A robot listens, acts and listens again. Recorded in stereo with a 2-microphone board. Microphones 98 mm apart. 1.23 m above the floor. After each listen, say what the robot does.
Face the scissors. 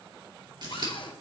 Turn 50° right.
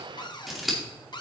Facing the scissors.